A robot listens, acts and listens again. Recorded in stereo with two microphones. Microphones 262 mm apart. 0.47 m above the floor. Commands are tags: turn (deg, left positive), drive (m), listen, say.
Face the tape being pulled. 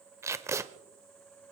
<turn deg="-30"/>
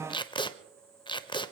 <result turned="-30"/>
<turn deg="20"/>
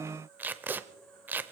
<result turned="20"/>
<say>Found it: tape being pulled, straight ahead.</say>